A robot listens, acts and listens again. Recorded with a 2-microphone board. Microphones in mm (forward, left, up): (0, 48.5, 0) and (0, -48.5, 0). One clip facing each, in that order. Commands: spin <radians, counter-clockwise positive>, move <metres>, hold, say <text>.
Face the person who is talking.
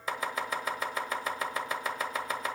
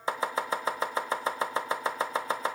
hold
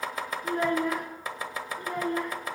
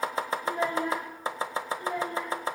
spin 1.57
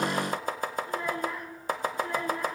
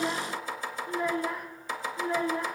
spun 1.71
spin -0.26
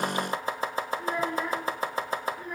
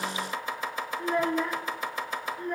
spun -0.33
say Facing the child speaking, 2 to 4 m away.